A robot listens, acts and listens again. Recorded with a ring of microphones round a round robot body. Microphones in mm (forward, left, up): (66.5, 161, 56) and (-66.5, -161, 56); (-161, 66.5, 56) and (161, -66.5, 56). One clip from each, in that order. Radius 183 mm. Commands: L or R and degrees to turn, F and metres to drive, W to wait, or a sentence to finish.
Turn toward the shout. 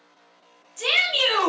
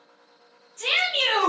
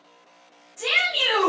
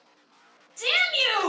L35
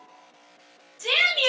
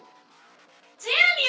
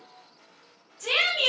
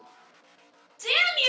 L15
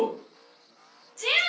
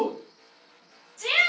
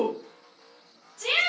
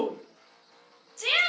Facing the shout, 1 to 2 m away.